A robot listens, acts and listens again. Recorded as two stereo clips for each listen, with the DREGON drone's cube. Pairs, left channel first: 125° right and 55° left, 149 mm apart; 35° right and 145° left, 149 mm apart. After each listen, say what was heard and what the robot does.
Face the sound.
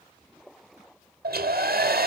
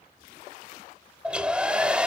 The hair dryer: 60° left. Turn 60° left.
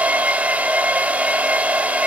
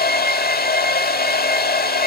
The hair dryer is now 25° right. Turn 25° right.
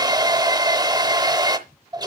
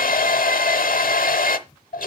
The hair dryer is now 10° right. Turn 10° right.
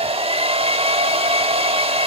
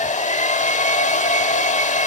Facing the hair dryer, under 1 m away.